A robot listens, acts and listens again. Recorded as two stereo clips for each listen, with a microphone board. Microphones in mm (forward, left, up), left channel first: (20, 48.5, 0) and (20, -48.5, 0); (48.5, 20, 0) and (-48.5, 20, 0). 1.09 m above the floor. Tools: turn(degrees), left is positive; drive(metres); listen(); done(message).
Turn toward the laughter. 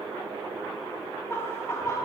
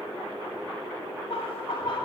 turn(degrees=35)
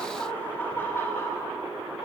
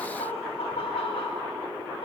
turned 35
turn(degrees=25)
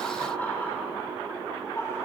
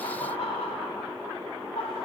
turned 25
turn(degrees=25)
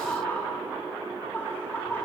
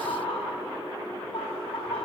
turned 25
turn(degrees=20)
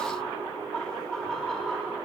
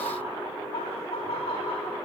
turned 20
done("Found it: laughter, straight ahead.")